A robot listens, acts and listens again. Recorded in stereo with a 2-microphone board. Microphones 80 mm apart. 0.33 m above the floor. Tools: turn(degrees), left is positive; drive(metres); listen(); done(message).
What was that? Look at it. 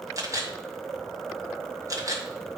turn(degrees=-45)
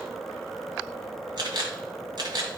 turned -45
turn(degrees=-85)
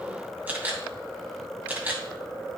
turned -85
turn(degrees=-25)
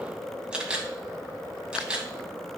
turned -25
turn(degrees=-10)
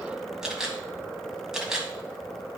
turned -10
done("Found it: a camera shutter, straight ahead.")